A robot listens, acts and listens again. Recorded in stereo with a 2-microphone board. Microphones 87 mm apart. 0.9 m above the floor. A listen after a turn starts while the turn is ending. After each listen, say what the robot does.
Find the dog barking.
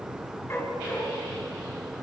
Turn 30° left.
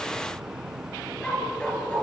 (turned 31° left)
Turn 15° left.
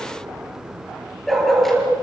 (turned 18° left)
Found it: a dog barking, straight ahead.